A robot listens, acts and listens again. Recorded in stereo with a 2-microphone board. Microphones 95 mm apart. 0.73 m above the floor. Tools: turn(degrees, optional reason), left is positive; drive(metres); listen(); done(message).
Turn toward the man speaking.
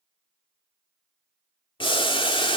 listen()
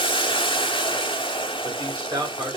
turn(degrees=-40, reason="The man speaking: about 40° right or 140° right.")
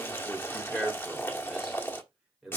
done("Found it: a man speaking, straight ahead, 2 to 4 m away.")